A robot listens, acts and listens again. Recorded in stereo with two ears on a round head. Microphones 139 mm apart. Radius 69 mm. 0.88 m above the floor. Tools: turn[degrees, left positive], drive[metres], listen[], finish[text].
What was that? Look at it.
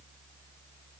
Action: listen[]
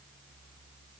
Action: listen[]
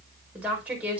Action: turn[-30]
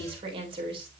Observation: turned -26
Thought: So it is at 145° right.
Action: turn[-145]
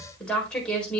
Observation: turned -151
Action: finish[Facing the woman speaking.]